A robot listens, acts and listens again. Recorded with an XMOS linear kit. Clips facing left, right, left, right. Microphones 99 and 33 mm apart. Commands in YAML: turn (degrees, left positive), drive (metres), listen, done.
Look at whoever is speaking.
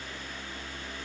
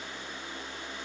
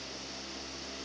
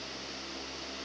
listen: true
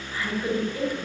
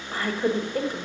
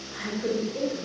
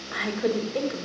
turn: -55
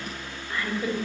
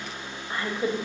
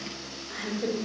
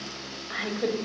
turn: -40
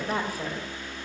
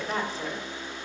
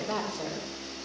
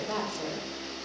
turn: 10
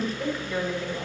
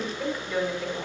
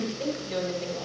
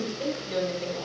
done: "Facing the woman speaking, 2 to 4 m away."